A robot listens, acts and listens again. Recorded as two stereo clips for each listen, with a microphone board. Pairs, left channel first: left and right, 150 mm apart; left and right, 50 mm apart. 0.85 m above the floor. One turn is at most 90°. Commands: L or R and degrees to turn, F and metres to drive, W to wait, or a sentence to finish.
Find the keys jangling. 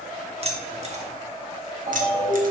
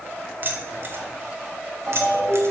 R60
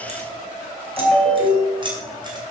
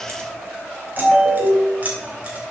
R30
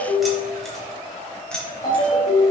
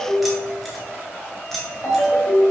Found it: keys jangling, straight ahead.